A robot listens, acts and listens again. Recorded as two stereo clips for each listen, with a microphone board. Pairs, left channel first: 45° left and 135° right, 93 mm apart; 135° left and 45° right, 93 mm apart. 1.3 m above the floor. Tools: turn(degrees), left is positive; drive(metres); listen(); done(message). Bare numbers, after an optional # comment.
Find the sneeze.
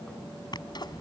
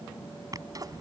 done("Found it: a sneeze, straight ahead.")